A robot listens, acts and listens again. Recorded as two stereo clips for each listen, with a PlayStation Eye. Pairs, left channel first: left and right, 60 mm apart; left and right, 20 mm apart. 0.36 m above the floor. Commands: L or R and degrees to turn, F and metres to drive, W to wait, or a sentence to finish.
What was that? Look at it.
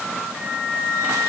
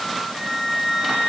R35
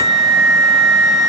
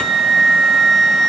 Found it: a flute, straight ahead, 1 to 2 m away.